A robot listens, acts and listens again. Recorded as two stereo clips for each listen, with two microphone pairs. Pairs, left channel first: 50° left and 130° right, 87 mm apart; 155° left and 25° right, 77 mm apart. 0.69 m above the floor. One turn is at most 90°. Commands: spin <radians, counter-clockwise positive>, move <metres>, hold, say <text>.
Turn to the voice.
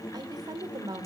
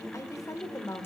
spin -1.57
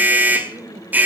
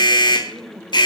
spin -1.31
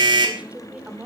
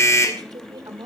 spin -0.96
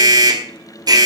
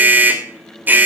hold
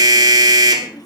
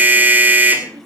hold
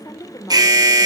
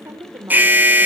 spin 0.17
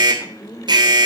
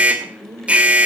say Found it: a woman speaking, straight ahead.